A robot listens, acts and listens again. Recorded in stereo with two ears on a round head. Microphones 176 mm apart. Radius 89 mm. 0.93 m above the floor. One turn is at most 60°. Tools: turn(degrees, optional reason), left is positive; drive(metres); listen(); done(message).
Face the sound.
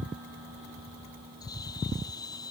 turn(degrees=20, reason="The bird: about 20° left or 160° left.")
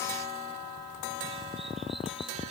listen()
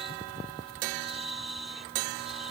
done("Facing the bird.")